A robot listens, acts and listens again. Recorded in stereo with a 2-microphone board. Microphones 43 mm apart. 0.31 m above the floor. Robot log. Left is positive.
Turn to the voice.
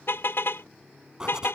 cmd idle
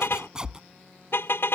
cmd idle
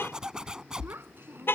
note: The child speaking: about 65° right or 115° right.
cmd yaw -65
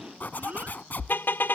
cmd idle
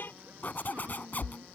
note: So it is at 40° right.
cmd yaw -40
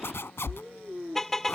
end: Facing the child speaking.